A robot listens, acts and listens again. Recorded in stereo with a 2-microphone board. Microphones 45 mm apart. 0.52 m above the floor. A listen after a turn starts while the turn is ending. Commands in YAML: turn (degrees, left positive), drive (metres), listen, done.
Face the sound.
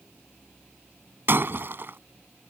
turn: -50
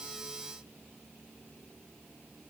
listen: true
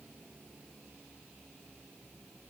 done: "I heard breaking glass, but can't make it out now. It was about straight ahead or 80° right."